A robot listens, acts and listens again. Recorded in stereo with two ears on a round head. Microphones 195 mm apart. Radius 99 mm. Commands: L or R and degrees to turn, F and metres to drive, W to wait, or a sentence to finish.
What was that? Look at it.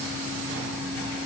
W
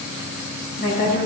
L45
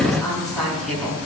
Facing the woman speaking.